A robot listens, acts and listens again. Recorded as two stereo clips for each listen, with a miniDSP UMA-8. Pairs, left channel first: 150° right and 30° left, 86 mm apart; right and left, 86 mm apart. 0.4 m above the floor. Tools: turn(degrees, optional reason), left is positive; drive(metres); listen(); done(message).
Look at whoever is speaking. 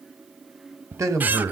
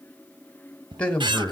turn(degrees=-15, reason="The man speaking: 15° right.")
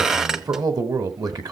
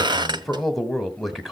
done("Found it: a man speaking, straight ahead.")